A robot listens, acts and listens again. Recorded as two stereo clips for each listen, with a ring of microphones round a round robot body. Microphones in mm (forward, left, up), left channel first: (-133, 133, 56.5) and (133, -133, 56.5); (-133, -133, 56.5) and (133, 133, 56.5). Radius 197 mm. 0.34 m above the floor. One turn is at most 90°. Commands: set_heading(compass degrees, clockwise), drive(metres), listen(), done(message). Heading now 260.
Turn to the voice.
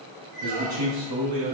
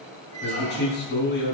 set_heading(330)
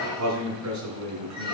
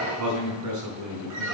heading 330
done("Found it: a man speaking, straight ahead.")